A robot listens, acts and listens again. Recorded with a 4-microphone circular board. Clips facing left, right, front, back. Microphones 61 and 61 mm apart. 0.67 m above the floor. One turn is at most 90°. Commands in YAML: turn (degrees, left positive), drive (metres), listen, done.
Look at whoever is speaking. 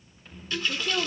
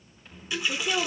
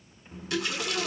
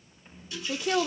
turn: -90
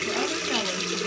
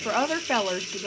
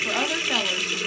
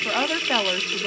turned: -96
turn: -90
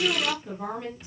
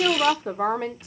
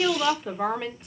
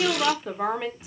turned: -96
turn: -90
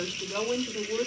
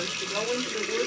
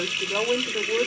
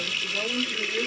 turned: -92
done: "Found it: a woman speaking, straight ahead, 2 to 4 m away."